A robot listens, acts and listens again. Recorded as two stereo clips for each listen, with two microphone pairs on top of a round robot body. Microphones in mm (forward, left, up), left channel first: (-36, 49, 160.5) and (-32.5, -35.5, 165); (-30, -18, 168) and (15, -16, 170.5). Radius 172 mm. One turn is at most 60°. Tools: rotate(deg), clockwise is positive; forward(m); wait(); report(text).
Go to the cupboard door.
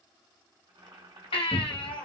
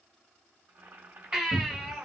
rotate(-60)
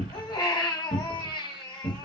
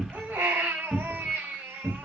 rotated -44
rotate(-60)
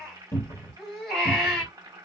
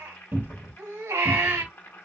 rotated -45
rotate(-45)
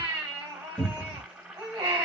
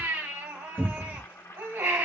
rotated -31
rotate(-10)
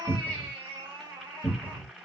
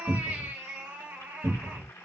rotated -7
forward(1.0)
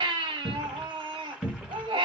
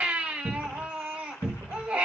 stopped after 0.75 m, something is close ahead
rotate(-10)
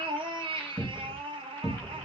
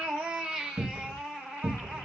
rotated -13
report("I am next to the cupboard door.")